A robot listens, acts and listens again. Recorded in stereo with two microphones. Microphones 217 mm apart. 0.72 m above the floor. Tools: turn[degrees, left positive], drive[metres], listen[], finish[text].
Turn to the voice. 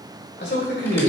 Thought: The man speaking: about 55° left or 125° left.
Action: turn[55]
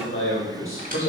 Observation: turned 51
Thought: So it is at 70° left.
Action: turn[70]
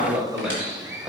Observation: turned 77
Action: finish[Found it: a man speaking, straight ahead, 2 to 4 m away.]